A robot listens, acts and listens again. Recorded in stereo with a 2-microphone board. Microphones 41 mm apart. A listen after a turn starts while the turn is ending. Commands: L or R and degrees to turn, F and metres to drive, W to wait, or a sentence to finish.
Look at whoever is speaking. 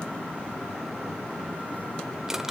W
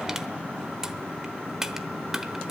W
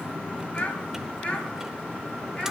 L25
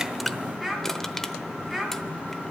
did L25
Facing the child speaking.